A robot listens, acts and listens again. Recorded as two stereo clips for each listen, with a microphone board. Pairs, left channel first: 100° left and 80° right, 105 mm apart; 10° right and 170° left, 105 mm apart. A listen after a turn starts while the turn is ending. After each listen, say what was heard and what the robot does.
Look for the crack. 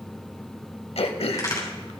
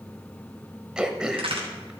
The crack: 155° left. Turn 155° left.
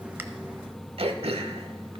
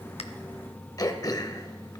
I heard a crack from this way, but can't make it out now.